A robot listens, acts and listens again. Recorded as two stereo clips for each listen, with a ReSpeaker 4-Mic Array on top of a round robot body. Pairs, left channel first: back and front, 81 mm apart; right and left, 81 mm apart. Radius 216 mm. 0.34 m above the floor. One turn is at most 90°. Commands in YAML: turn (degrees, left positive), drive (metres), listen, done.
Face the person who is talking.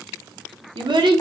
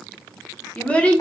turn: -15
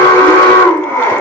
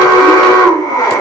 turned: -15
listen: true
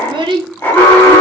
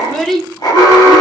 done: "Found it: a child speaking, straight ahead, under 1 m away."